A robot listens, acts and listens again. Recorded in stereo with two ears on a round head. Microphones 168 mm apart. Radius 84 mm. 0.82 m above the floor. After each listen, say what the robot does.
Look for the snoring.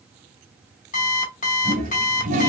Keep listening.
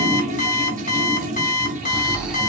Turn 30° right.
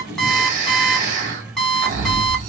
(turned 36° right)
Turn 135° right.
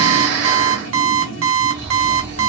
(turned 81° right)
Turn 55° right.
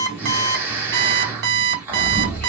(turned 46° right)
Turn 10° right.
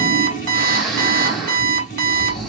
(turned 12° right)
Found it: snoring, straight ahead, 1 to 2 m away.